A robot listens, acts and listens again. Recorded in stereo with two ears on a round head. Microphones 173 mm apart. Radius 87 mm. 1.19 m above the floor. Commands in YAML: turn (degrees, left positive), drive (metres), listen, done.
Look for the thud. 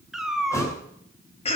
turn: 15
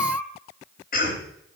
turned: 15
listen: true
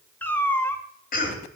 done: "I heard a thud, but can't make it out now. It was about straight ahead or 150° left."